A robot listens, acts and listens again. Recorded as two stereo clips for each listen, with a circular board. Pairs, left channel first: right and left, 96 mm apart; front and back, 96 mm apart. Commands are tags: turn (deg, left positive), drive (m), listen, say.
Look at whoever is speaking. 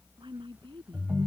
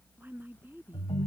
<turn deg="115"/>
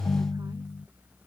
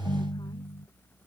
<listen/>
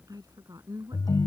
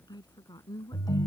<turn deg="40"/>
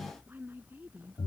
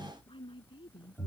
<turn deg="20"/>
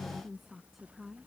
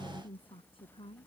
<say>Facing the woman speaking.</say>